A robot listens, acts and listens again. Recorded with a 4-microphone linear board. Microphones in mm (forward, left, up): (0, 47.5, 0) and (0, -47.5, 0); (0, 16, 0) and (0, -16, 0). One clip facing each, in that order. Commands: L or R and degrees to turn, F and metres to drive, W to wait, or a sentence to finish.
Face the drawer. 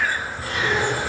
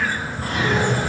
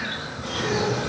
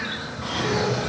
R50
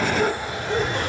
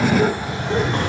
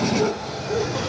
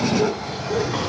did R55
R75
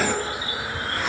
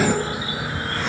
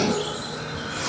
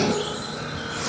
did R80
W
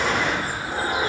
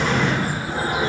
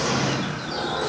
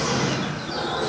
Found it: a drawer, straight ahead.